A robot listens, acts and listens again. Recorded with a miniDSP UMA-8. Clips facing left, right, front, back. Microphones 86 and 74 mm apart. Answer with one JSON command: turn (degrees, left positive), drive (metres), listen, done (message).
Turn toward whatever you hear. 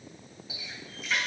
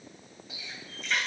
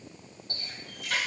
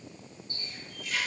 {"done": "Found it: a running tap, straight ahead, 2 to 4 m away."}